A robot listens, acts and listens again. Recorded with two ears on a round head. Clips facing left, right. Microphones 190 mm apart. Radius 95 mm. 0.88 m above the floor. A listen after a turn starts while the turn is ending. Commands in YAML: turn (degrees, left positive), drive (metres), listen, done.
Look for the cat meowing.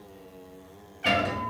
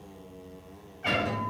turn: 50
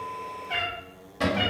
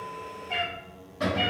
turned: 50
turn: 10
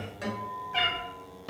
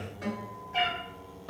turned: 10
done: "Found it: a cat meowing, straight ahead."